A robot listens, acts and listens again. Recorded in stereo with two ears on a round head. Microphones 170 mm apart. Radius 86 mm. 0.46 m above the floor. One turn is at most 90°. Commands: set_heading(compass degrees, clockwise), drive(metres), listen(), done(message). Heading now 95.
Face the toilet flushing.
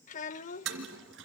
set_heading(185)
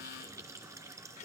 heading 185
set_heading(200)
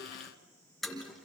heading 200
done("Found it: a toilet flushing, straight ahead, 2 to 4 m away.")